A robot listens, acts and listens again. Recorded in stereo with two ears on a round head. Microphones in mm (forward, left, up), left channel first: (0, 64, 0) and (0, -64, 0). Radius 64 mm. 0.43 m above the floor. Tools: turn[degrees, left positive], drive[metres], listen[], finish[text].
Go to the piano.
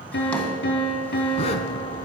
Action: turn[90]
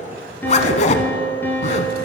Thought: So it is at 15° left.
Action: turn[15]
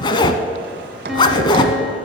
Action: drive[1.0]
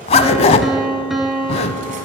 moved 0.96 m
Action: drive[1.0]
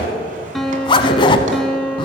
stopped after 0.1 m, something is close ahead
Action: finish[Arrived at the piano, straight ahead.]